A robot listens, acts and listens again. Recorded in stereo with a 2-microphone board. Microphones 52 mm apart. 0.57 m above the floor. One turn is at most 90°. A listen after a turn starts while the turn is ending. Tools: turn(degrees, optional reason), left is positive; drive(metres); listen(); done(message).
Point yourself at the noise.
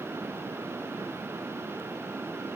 listen()
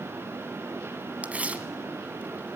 turn(degrees=-25, reason="The tearing paper: about 25° right or 155° right.")
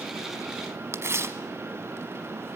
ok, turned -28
turn(degrees=-90, reason="So it is at 130° right.")
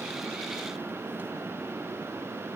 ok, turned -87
turn(degrees=-40, reason="Nothing new. It was at 40° right.")
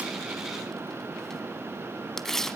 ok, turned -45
done("Facing the tearing paper.")